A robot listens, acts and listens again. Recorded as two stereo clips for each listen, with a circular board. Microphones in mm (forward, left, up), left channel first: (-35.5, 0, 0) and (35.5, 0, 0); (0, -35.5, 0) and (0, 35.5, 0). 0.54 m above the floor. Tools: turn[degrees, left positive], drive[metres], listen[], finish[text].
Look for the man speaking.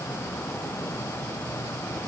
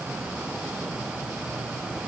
Action: listen[]
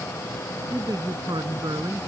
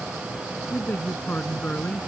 Thought: The man speaking: 20° right.
Action: turn[-20]
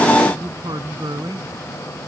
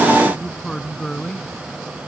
Action: finish[Found it: a man speaking, straight ahead.]